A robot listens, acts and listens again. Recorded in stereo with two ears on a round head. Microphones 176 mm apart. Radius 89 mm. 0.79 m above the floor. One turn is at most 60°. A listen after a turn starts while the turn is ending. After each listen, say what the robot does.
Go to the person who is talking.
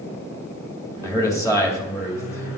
Turn 15° left.
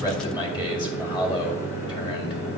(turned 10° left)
Turn 25° left.
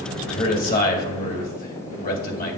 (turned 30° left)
Turn 60° left.
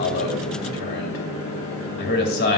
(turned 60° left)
Turn 60° left.
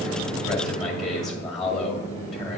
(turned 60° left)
Drive 1.0 m forward.
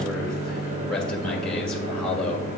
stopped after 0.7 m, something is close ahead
Keep listening.
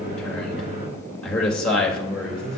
I am next to the man speaking.